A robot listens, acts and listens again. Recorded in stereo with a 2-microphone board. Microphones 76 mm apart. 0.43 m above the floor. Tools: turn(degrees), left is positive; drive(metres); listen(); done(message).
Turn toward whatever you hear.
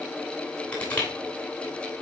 turn(degrees=20)
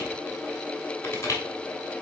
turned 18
turn(degrees=145)
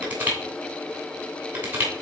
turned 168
turn(degrees=-25)
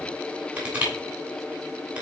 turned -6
turn(degrees=-20)
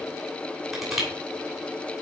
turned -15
done("Found it: crushing, straight ahead, 2 to 4 m away.")